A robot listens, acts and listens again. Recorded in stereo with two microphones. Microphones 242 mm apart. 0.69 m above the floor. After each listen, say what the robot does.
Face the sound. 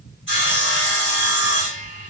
Turn 55° left.
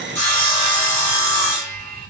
Turn 10° left.
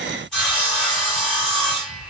Facing the sawing, 2 to 4 m away.